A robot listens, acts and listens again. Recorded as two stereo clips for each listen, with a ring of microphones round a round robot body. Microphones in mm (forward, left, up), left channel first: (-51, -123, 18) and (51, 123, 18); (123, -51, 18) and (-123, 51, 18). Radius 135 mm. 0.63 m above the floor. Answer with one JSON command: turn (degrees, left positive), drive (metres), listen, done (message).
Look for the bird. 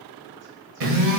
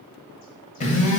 {"listen": true}
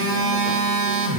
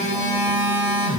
{"listen": true}
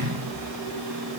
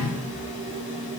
{"done": "I can't make out a bird, only a phone buzzing."}